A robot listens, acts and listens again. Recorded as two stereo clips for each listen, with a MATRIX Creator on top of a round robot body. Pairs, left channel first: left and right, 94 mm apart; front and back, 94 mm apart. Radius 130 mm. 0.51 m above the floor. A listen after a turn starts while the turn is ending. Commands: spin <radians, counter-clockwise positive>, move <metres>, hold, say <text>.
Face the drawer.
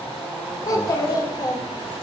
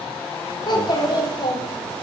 hold
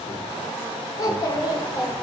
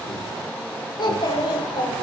hold
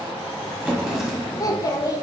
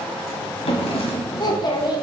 say Facing the drawer, 1 to 2 m away.